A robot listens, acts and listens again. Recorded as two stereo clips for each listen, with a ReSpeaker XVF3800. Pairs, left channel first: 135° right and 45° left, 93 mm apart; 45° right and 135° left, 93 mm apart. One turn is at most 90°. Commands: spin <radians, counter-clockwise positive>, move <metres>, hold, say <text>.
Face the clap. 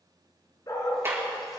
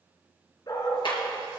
spin -0.26
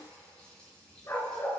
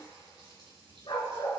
hold
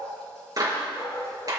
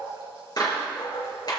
say Facing the clap.